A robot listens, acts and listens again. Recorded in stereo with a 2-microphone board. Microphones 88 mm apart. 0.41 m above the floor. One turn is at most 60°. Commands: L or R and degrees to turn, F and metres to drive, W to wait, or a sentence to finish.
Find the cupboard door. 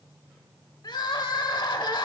W
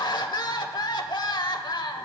W
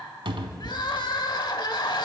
R60
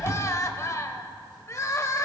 R35
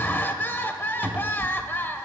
R20
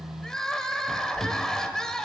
Facing the cupboard door.